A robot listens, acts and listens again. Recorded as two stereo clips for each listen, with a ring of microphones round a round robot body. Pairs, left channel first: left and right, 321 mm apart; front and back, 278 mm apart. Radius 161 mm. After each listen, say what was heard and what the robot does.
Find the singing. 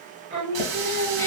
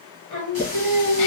The singing: 35° right. Turn 35° right.
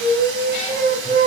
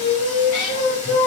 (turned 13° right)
The singing is now 25° right. Turn 25° right.
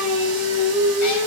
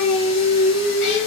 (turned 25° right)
The singing is now 10° right. Turn 10° right.
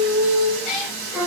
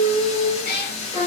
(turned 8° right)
The singing is now 20° right. Turn 20° right.
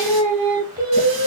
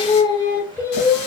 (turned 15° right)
The singing is now 80° right. Turn 80° right.
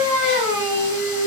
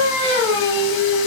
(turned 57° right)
The singing is now 30° right. Turn 30° right.
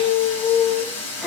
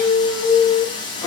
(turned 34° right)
Facing the singing, 1 to 2 m away.